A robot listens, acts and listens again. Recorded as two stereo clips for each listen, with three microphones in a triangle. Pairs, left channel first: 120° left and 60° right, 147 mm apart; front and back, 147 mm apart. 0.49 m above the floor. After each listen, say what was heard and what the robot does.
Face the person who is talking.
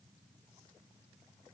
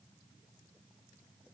Keep listening.
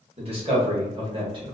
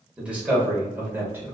The man speaking: 110° right. Turn 110° right.
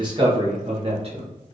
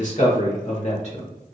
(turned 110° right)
The man speaking is now 25° right. Turn 25° right.
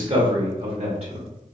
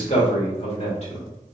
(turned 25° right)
The man speaking is now 30° right. Turn 30° right.
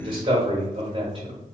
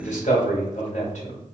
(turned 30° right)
The man speaking is now 10° right. Turn 10° right.
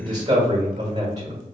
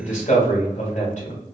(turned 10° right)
Found it: a man speaking, straight ahead.